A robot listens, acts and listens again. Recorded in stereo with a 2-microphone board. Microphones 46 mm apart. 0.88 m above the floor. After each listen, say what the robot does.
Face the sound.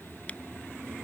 Turn 30° left.
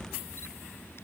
Keep listening.
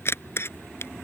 Turn 120° left.
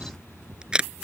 Turn 20° right.
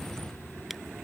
Keep listening.
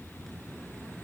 Keep listening.
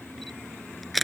Found it: a camera shutter, straight ahead.